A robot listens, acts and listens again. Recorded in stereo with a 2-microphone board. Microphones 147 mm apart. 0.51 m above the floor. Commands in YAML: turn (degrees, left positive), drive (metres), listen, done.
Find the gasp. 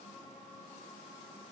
listen: true
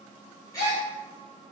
turn: 25
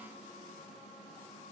listen: true
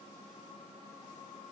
done: "I heard a gasp, but can't make it out now. It was about straight ahead or 130° left."